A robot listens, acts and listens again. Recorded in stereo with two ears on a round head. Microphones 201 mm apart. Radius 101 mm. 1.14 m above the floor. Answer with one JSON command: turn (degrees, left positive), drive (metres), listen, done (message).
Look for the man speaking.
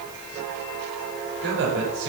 {"turn": -60}
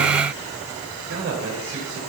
{"turn": -55}
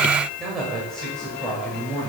{"done": "Found it: a man speaking, straight ahead."}